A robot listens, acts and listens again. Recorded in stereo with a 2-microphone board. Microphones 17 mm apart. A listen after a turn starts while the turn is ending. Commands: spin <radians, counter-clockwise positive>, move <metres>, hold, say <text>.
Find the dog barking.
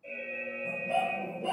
spin -0.79
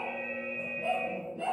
spin -1.75
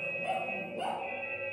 spin -0.52
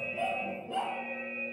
spin -0.52
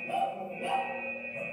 spin -0.17
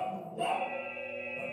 say Facing the dog barking, over 4 m away.